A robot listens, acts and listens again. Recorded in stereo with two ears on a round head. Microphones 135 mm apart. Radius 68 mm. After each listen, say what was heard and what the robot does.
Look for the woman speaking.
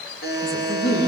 The woman speaking: about 25° left or 155° left. Turn 25° left.
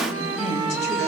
So it is at 130° left. Turn 130° left.
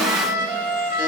Keep listening.
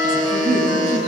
Keep listening.
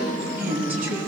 The woman speaking is now 10° right. Turn 10° right.
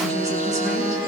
Keep listening.
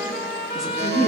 Facing the woman speaking.